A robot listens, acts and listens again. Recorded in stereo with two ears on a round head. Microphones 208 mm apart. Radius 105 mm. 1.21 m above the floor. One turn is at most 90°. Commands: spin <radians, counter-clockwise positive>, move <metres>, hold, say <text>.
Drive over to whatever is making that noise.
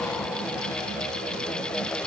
hold
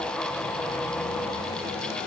hold
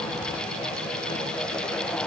say I can't make out anything.